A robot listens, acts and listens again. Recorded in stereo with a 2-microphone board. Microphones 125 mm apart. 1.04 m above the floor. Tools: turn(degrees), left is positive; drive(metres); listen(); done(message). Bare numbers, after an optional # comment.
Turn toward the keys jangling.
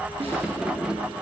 turn(-30)
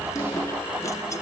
listen()
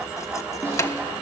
# So it is at 25° left.
turn(25)
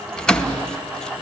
done("Found it: keys jangling, straight ahead, under 1 m away.")